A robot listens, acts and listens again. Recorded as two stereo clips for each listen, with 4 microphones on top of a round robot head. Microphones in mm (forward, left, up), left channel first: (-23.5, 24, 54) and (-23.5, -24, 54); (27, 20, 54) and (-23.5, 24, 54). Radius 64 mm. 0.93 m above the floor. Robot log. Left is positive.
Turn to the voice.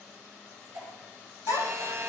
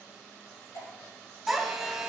note: The child speaking: 90° left.
cmd yaw +90
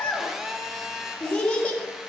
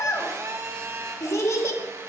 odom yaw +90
note: The child speaking is now 20° left.
cmd yaw +20
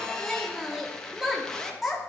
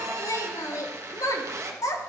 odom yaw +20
end: Facing the child speaking, 1 to 2 m away.